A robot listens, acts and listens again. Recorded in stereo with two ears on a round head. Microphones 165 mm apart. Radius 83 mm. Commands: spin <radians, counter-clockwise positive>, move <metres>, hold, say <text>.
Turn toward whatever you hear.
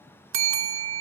spin -1.57
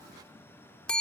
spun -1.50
say Facing the bell, 1 to 2 m away.